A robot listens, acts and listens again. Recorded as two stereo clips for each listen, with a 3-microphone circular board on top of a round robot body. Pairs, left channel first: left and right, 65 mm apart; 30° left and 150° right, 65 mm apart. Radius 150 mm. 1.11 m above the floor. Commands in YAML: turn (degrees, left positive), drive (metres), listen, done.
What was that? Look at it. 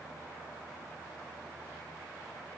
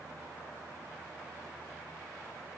listen: true
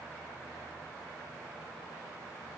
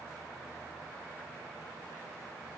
listen: true
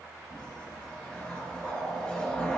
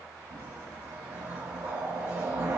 turn: 160
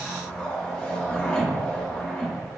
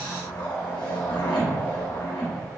turn: 20
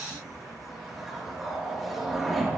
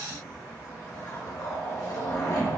done: "Found it: a whoosh, straight ahead."